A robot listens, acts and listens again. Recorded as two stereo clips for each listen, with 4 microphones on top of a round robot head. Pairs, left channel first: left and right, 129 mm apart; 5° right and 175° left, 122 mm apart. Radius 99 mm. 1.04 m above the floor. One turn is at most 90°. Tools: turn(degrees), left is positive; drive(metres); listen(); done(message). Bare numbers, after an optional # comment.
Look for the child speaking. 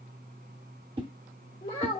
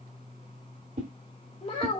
# The child speaking: 35° left.
turn(35)
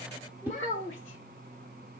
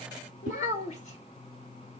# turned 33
# The child speaking is now 10° left.
turn(10)
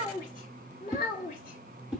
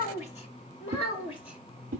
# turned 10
# The child speaking is now 35° left.
turn(35)
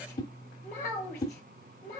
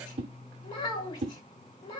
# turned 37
# The child speaking is now 20° left.
turn(20)
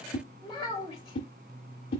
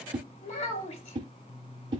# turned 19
done("Facing the child speaking.")